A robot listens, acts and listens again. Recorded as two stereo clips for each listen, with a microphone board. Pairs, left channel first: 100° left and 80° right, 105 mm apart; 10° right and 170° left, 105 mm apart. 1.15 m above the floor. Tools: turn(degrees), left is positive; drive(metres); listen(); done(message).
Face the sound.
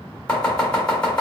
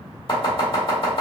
turn(degrees=20)
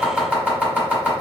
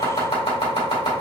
done("Found it: chopping, straight ahead, 1 to 2 m away.")